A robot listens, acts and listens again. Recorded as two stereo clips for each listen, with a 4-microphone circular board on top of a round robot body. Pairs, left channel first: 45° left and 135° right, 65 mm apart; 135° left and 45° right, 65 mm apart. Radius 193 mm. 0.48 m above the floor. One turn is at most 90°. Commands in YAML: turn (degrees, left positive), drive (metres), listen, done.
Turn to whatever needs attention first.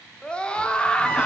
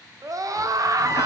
turn: -25
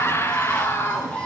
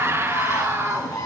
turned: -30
done: "Facing the scream, 1 to 2 m away."